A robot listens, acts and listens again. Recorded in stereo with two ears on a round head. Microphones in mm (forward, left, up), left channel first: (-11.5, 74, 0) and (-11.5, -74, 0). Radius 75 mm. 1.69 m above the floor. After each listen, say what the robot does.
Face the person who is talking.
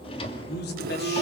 Turn 70° left.
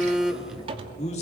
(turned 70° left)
Turn 40° left.
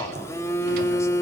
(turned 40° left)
Turn 20° left.
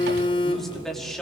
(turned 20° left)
Found it: a man speaking, straight ahead.